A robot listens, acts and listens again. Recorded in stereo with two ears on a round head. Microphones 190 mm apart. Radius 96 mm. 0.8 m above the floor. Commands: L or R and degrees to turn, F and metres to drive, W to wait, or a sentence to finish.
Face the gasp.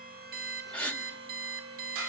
L30
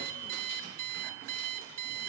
W
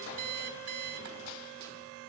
I heard a gasp, but can't make it out now. It was about 25° right or 145° left.